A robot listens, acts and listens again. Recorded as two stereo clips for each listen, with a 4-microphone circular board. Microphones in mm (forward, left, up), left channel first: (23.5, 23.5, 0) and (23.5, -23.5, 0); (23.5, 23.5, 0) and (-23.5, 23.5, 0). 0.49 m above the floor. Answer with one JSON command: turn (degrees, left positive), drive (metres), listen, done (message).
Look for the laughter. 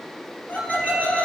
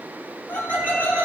{"turn": 40}
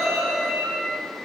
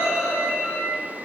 {"done": "Found it: laughter, straight ahead, 2 to 4 m away."}